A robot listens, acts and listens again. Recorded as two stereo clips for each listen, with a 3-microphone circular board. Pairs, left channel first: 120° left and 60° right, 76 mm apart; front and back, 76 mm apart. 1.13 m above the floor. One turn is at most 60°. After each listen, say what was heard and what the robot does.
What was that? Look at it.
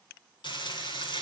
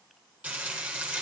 The frying: 105° left. Turn 60° left.
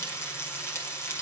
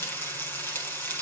The frying is now 60° left. Turn 60° left.
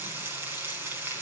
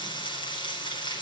Found it: frying, straight ahead.